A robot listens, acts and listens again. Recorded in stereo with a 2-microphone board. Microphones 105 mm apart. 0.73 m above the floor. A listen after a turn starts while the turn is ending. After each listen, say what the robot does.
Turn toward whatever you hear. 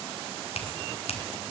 Turn 70° left.
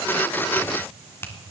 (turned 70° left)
Turn 20° left.
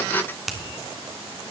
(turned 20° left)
Found it: a finger snap, straight ahead, 1 to 2 m away.